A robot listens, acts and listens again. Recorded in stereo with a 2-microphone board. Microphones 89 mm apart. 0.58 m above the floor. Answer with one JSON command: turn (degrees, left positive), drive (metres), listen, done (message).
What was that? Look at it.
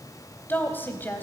{"turn": 20}
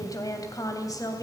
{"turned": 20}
{"turn": 135}
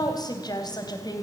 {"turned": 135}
{"turn": 50}
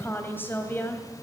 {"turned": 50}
{"turn": 25}
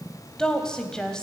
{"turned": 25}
{"turn": 10}
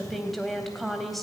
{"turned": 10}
{"done": "Facing the woman speaking."}